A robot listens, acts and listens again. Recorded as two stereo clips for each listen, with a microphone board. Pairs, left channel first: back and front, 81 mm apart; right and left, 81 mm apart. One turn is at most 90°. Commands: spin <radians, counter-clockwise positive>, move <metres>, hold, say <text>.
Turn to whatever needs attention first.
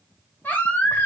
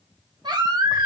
spin 1.57
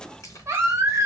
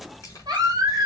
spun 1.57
spin 1.05
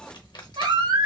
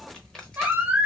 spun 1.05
spin 0.35
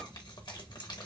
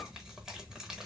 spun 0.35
hold
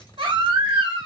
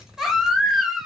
say Found it: a baby crying, straight ahead, under 1 m away.